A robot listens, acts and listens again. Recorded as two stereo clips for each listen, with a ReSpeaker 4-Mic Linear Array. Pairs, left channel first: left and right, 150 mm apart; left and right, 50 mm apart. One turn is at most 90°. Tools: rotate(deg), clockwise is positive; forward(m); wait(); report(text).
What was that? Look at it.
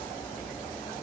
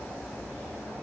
wait()
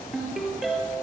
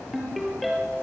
rotate(-30)
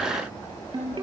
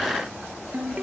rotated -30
rotate(30)
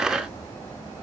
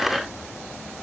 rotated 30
wait()
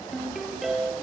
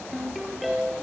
report("Found it: a ringtone, straight ahead.")